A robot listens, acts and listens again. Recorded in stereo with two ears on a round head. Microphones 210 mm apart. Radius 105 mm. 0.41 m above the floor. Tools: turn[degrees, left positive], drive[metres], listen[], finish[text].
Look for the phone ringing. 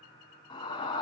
Action: listen[]
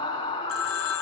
Thought: The phone ringing: about 65° left or 115° left.
Action: turn[65]
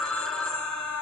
Action: finish[Found it: a phone ringing, straight ahead.]